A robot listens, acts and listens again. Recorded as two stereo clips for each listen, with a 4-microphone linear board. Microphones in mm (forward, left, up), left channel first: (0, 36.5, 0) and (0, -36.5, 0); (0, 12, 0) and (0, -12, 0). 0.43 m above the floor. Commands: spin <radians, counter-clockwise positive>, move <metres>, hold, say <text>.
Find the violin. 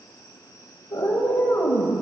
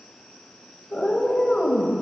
hold
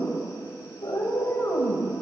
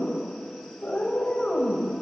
hold
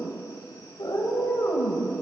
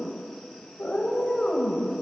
say I can't make out a violin, only a cat meowing.